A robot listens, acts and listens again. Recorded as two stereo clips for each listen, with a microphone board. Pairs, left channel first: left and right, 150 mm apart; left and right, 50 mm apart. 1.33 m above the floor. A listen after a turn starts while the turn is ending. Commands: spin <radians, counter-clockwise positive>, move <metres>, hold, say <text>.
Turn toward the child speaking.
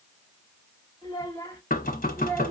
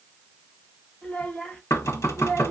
spin 0.52
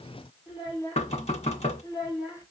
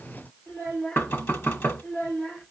spin 2.71
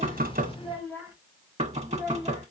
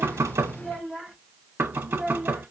spin -0.26
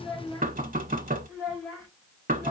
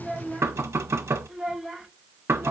say Found it: a child speaking, straight ahead.